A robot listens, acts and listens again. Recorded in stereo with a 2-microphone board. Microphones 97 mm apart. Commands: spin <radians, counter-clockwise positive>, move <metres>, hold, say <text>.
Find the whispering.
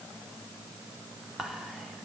spin 0.52
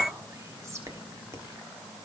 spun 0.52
spin -0.52
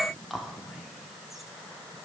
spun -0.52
say Found it: whispering, straight ahead, 1 to 2 m away.